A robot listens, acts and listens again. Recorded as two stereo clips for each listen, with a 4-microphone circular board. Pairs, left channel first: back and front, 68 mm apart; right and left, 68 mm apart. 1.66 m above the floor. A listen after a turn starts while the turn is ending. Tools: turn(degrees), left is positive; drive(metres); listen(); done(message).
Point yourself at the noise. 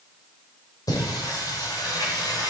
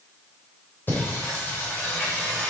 turn(degrees=-155)
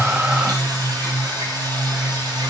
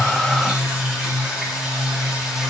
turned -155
turn(degrees=10)
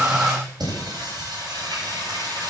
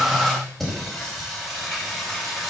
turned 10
done("Facing the singing, over 4 m away.")